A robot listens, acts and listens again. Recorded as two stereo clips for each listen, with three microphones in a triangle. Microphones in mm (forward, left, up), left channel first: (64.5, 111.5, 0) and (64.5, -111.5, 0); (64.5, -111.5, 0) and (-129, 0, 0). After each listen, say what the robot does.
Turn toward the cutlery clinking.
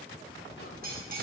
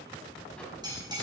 Turn 140° right.
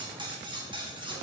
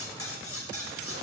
Turn 20° right.
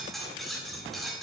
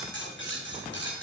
Found it: cutlery clinking, straight ahead.